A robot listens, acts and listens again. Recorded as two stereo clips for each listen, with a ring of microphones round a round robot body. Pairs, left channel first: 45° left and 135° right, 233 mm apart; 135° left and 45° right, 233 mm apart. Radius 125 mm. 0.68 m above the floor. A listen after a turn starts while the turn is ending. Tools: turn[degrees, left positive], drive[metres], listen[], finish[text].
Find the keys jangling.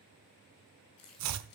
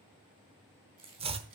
Thought: The keys jangling: 25° left.
Action: turn[25]
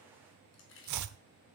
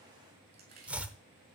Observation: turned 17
Action: finish[Facing the keys jangling, over 4 m away.]